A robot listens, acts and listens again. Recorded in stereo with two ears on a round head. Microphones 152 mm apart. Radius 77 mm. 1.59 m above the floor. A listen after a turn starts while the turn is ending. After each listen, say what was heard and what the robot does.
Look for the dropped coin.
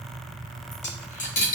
The dropped coin: about 50° left or 130° left. Turn 50° left.
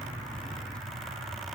Keep listening.
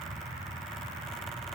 I heard a dropped coin, but can't make it out now. It was about straight ahead or 80° left.